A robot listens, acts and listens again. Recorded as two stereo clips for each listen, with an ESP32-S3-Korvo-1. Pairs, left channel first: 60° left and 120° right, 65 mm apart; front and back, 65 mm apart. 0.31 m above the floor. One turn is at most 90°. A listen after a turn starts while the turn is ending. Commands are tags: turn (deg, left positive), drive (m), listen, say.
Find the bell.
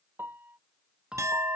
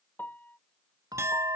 <turn deg="90"/>
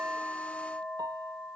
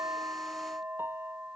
<turn deg="90"/>
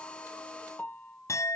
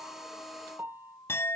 <turn deg="-10"/>
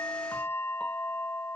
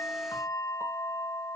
<say>Found it: a bell, straight ahead.</say>